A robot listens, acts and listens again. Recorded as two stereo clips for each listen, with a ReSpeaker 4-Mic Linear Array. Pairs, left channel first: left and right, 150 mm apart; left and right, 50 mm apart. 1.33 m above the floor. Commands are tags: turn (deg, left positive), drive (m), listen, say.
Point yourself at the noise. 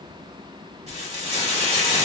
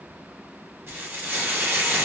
<turn deg="-45"/>
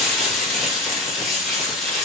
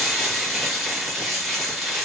<say>Found it: frying, straight ahead, 1 to 2 m away.</say>